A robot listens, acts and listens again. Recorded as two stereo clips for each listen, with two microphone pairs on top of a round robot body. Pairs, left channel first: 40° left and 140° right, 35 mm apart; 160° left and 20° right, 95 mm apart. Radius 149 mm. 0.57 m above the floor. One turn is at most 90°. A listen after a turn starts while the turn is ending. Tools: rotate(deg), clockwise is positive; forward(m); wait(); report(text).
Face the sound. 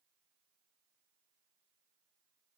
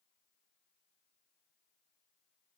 wait()
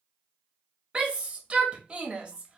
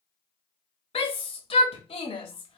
rotate(-90)
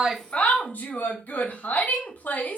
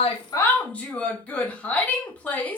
rotate(-75)
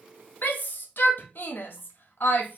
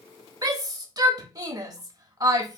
rotate(-15)
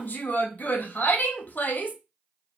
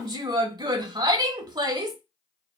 report("Facing the shout.")